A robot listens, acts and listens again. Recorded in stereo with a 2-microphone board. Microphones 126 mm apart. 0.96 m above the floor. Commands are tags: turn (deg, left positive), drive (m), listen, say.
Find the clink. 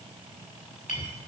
<turn deg="90"/>
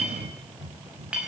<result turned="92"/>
<say>Facing the clink.</say>